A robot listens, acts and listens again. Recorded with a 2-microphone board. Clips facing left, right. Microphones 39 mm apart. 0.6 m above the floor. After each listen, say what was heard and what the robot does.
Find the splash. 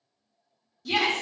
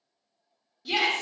Keep listening.
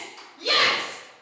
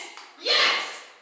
The splash: about 60° right or 120° right. Turn 60° right.
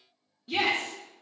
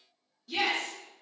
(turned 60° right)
Keep listening.
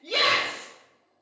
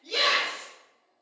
I heard a splash, but can't make it out now. It was about straight ahead or 60° right.